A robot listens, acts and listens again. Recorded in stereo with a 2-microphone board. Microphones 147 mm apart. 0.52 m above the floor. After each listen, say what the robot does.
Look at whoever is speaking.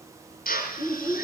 Turn 25° left.
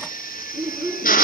Found it: a child speaking, straight ahead.